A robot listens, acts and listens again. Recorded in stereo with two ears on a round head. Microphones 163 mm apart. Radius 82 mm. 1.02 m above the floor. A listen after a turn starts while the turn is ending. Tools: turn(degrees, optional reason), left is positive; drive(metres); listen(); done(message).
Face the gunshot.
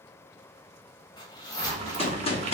turn(degrees=35, reason="The gunshot: about 35° left or 145° left.")
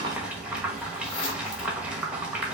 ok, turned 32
listen()
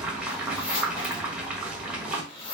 done("I heard a gunshot, but can't make it out now. It was about straight ahead or 115° left.")